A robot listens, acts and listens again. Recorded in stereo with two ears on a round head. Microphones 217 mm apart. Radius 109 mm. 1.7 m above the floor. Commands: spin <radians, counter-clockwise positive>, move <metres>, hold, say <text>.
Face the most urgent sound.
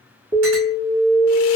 spin -0.35
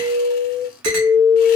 spin -2.36
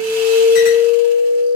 say Facing the alarm.